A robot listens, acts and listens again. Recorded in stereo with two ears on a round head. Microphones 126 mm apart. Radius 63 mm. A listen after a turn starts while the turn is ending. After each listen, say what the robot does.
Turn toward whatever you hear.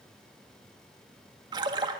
Turn 30° right.
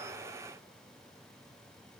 Keep listening.
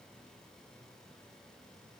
I heard a splash, but can't make it out now. It was about straight ahead or 120° right.